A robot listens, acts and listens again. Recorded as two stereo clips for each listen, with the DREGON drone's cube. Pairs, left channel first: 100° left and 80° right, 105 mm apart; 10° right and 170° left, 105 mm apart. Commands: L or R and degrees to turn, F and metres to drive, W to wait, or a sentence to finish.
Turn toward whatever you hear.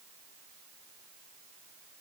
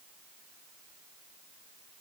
W
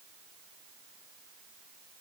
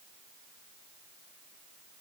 W
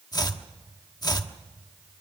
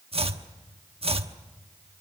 L150
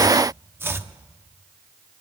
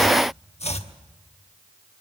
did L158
R10
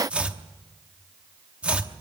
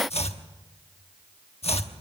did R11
Found it: chopping, straight ahead, 1 to 2 m away.